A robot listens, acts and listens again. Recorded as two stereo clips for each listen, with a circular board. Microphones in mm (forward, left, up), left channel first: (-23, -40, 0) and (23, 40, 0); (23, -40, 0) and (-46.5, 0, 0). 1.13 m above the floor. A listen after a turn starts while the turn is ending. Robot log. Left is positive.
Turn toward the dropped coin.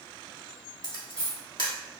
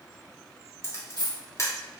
note: The dropped coin: 160° left.
cmd yaw +160
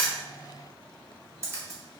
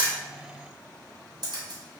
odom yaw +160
end: I heard a dropped coin from this way, but can't make it out now.